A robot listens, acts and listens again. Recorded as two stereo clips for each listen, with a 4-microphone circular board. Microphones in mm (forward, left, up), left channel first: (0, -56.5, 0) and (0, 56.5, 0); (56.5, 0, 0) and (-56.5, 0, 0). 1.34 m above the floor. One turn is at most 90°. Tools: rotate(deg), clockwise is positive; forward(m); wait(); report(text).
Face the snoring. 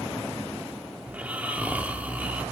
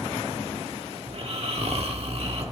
rotate(-90)
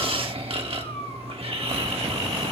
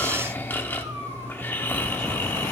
rotate(-70)
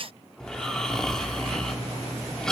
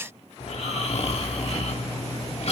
report("Found it: snoring, straight ahead, 1 to 2 m away.")